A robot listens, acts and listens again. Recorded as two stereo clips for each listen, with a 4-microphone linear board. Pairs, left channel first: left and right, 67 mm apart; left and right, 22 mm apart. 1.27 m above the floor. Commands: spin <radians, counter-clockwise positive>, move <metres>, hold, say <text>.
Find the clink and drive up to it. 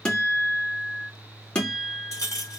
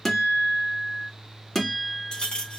spin 0.96
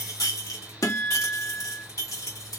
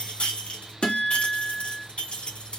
spin 1.22
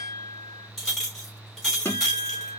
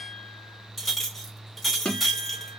move 1.0
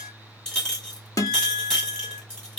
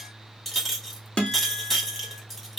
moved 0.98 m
spin 0.17
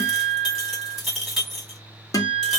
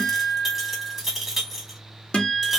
move 1.0
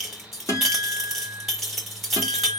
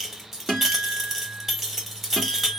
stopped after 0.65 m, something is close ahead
say Arrived at the clink, straight ahead.